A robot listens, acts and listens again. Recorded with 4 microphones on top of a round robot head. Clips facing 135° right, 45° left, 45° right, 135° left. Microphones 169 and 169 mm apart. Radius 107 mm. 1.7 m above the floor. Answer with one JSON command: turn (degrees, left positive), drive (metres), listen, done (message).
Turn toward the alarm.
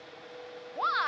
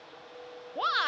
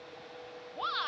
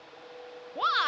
{"listen": true}
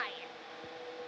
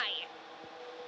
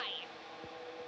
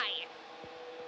{"listen": true}
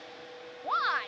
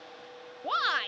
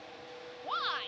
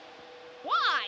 {"done": "I can't make out an alarm to turn to."}